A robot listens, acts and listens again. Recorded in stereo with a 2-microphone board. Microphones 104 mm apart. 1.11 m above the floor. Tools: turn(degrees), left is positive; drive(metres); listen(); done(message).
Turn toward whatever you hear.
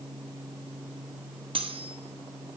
turn(degrees=-60)
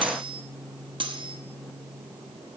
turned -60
turn(degrees=-55)
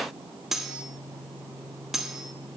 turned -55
done("Found it: cutlery clinking, straight ahead, under 1 m away.")